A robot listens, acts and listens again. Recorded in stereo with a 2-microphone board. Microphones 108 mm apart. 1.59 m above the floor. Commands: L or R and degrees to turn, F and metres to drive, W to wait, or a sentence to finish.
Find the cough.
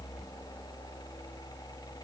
W
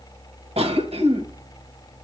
R90
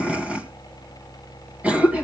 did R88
R15
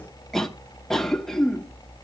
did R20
Facing the cough.